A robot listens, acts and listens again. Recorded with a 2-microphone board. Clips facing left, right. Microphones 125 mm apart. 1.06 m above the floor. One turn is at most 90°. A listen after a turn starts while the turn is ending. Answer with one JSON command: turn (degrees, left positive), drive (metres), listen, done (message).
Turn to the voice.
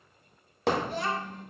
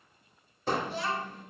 {"turn": 50}
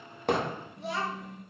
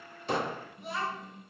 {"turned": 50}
{"turn": 80}
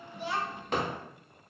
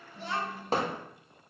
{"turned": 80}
{"done": "Found it: a child speaking, straight ahead."}